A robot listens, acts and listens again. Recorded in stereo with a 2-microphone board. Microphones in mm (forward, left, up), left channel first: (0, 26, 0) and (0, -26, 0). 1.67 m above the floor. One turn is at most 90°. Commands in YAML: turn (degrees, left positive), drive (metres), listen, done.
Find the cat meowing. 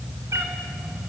turn: -65
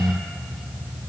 listen: true
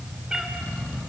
turn: -15
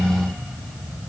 listen: true
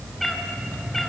done: "Found it: a cat meowing, straight ahead."